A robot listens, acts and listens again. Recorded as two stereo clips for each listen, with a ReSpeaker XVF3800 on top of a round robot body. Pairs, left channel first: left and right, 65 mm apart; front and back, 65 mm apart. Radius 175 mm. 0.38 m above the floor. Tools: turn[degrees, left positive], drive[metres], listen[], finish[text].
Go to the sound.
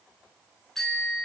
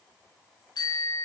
Action: drive[1.0]
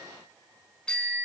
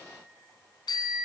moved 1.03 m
Thought: The bicycle bell is now 15° left.
Action: turn[15]
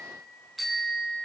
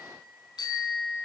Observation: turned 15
Action: drive[1.0]
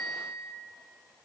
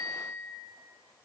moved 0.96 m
Action: drive[1.0]
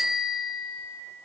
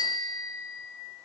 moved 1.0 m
Action: drive[1.0]
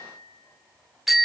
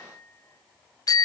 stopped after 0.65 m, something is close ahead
Action: finish[Arrived at the bicycle bell, straight ahead.]